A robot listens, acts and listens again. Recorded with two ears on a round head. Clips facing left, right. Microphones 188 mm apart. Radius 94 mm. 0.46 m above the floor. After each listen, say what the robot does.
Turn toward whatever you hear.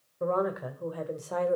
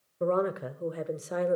Turn 20° right.
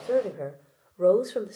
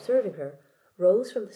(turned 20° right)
Turn 30° left.
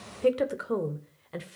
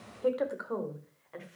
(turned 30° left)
Turn 125° left.
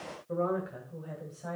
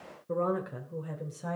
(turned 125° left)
Turn 65° right.
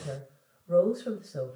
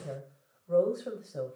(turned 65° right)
Turn 10° left.
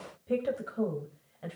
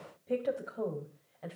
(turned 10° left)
Found it: a woman speaking, straight ahead.